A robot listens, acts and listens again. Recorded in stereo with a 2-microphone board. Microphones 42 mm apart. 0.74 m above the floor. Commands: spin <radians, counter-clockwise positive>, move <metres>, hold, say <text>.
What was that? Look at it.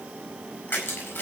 spin 1.05
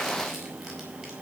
hold
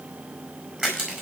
say Found it: crushing, straight ahead.